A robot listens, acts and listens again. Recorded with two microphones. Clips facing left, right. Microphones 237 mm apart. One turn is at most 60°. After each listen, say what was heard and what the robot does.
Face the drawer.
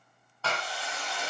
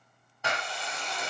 Keep listening.
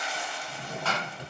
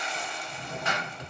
The drawer: about 30° left or 150° left. Turn 30° left.
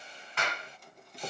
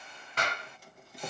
Facing the drawer.